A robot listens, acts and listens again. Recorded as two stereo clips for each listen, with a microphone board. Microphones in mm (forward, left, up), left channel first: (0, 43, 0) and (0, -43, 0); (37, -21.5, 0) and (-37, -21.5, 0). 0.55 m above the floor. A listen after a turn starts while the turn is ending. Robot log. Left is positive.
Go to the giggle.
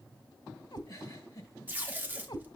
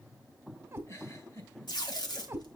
note: The giggle: 40° left.
cmd yaw +40
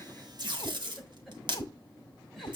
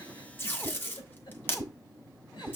cmd fwd 1.0
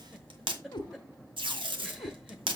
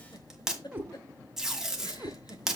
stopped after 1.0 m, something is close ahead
end: Arrived at the giggle, straight ahead.